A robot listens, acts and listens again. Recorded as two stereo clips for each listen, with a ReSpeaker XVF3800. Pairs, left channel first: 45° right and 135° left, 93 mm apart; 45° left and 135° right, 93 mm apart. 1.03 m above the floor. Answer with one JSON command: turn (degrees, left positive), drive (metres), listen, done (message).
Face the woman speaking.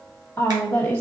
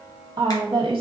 {"turn": -110}
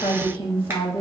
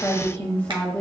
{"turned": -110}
{"turn": -30}
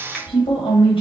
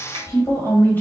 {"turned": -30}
{"turn": -30}
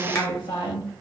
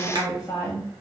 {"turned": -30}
{"turn": -20}
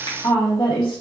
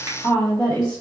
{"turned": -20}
{"turn": -15}
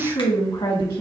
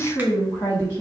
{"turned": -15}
{"done": "Facing the woman speaking, 1 to 2 m away."}